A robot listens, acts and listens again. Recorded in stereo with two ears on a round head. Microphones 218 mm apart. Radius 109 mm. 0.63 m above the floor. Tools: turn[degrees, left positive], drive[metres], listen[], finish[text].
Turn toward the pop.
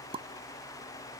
Thought: The pop: about 25° right or 155° right.
Action: turn[-25]
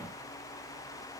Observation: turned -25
Action: listen[]
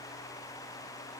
Action: finish[I heard a pop, but can't make it out now. It was about straight ahead or 130° right.]